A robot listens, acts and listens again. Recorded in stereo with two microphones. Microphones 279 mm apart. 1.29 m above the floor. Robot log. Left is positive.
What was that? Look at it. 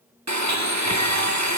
note: The blender: about 75° right or 105° right.
cmd yaw -75
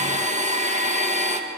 note: So it is at 25° right.
cmd yaw -25
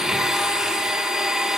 end: Found it: a blender, straight ahead.